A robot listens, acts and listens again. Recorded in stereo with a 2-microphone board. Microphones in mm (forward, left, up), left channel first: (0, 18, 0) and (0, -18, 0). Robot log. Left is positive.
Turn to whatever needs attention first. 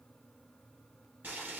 cmd idle
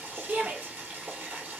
note: The shout: about 50° right or 130° right.
cmd yaw -50
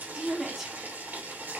note: So it is at 10° right.
cmd yaw -10
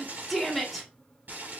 end: Found it: a shout, straight ahead.